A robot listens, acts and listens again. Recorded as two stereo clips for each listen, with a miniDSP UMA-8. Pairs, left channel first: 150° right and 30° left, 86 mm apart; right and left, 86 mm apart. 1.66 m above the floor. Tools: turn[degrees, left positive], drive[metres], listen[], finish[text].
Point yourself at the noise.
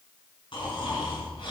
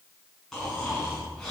Thought: The snoring: 175° right.
Action: turn[-175]
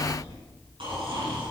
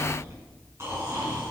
Thought: The snoring is now 30° left.
Action: turn[30]
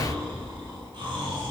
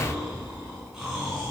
Action: finish[Facing the snoring, over 4 m away.]